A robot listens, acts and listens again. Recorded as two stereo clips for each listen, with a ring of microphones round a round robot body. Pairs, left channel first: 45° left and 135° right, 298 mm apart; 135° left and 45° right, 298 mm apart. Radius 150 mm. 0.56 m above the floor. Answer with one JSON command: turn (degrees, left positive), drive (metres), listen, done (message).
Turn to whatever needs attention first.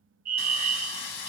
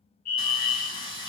{"turn": 165}
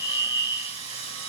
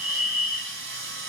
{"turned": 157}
{"done": "Found it: a fire alarm, straight ahead."}